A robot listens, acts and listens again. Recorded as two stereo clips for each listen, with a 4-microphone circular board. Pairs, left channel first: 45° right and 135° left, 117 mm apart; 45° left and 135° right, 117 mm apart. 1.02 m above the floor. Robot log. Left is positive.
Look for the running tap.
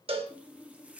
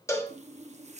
note: The running tap: 145° right.
cmd yaw -145
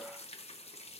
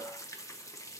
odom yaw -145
note: The running tap is now 20° right.
cmd yaw -20
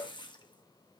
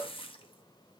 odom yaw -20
end: Facing the running tap, 1 to 2 m away.